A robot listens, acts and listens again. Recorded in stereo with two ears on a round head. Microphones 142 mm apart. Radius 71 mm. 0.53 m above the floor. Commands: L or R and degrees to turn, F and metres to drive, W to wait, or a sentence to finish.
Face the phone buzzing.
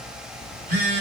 R60
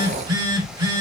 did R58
R35
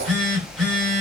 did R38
Found it: a phone buzzing, straight ahead.